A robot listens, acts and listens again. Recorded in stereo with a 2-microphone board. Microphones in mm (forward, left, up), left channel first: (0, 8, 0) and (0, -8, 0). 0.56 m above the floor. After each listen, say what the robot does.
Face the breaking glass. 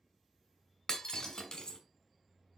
Turn 45° left.
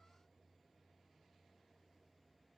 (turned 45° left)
Keep listening.
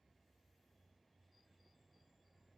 I heard breaking glass, but can't make it out now. It was about straight ahead or 90° left.